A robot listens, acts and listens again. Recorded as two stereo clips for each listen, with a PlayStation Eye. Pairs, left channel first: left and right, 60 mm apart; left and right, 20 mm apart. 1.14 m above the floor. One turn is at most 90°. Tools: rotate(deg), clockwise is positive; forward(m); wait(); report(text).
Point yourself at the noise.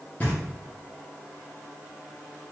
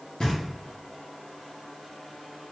rotate(-25)
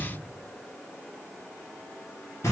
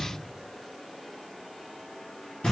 rotate(-90)
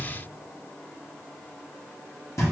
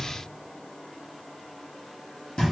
rotate(-60)
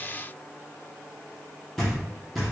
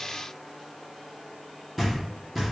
report("Found it: knocking, straight ahead.")